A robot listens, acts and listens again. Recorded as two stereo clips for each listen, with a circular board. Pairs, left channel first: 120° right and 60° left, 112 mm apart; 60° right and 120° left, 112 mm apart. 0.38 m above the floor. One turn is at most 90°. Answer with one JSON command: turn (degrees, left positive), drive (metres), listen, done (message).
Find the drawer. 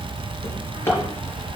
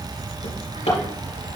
{"turn": -55}
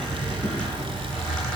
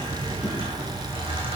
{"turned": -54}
{"listen": true}
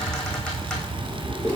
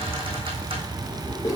{"done": "Found it: a drawer, straight ahead."}